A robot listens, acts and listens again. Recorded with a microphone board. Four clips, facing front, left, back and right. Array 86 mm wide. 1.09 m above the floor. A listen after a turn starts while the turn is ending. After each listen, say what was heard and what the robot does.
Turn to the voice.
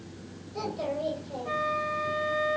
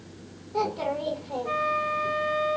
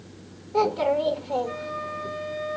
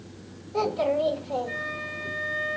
The child speaking: 175° left. Turn 175° left.
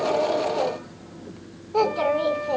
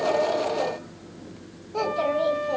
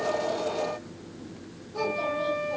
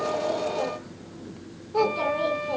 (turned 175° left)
The child speaking is now 15° right. Turn 15° right.
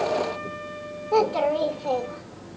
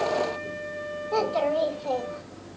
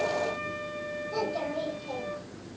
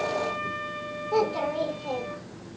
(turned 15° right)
Found it: a child speaking, straight ahead.